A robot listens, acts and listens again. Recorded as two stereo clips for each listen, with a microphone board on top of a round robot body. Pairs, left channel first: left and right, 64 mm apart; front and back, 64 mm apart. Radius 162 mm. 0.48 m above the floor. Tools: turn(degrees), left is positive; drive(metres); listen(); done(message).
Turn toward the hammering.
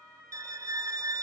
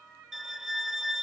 listen()
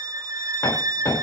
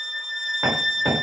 turn(degrees=125)
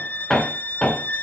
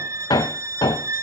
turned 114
turn(degrees=10)
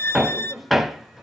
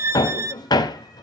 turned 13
done("Found it: hammering, straight ahead.")